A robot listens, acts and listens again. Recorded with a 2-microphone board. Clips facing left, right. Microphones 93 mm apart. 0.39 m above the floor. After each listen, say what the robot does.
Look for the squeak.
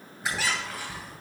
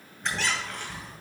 Turn 30° left.
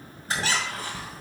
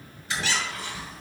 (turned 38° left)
Turn 135° left.
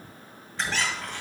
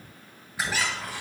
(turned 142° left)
Turn 10° right.
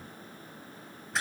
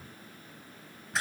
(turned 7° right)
Found it: a squeak, straight ahead.